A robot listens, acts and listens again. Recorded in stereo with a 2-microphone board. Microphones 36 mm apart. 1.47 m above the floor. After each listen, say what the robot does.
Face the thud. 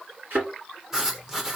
Turn 70° right.
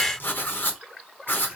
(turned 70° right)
Keep listening.
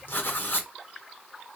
I heard a thud, but can't make it out now. It was about straight ahead or 40° right.